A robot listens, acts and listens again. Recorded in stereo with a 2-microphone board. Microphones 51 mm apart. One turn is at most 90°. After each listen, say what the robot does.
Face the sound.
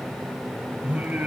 Turn 35° right.
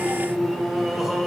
Turn 10° right.
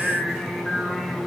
Facing the singing, over 4 m away.